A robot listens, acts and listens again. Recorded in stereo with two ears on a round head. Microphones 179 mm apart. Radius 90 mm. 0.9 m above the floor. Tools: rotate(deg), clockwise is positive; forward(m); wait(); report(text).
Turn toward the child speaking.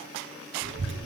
rotate(60)
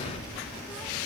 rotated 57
report("Facing the child speaking, under 1 m away.")